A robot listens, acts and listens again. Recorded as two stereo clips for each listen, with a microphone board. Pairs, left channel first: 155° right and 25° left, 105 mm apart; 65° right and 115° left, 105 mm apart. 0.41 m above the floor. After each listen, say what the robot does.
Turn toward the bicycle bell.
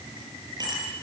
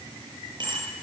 Turn 70° left.
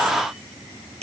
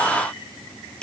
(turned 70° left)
Turn 15° left.
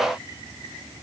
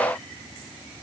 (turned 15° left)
Keep listening.
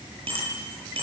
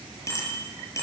Found it: a bicycle bell, straight ahead.